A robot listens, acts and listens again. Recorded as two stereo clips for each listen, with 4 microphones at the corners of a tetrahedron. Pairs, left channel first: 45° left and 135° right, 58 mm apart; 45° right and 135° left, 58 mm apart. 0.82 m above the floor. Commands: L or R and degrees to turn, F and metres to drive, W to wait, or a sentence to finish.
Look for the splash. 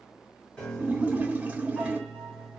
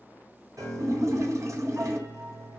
L160
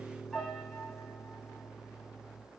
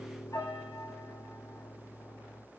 Facing where the splash came from. I can't hear it now.